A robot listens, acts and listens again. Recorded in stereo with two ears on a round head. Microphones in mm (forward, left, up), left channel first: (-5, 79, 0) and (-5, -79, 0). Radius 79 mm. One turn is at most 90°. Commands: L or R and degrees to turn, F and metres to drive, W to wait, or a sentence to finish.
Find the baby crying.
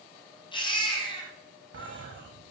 L30
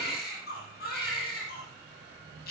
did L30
L90
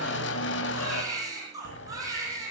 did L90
R20
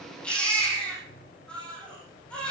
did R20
Found it: a baby crying, straight ahead, over 4 m away.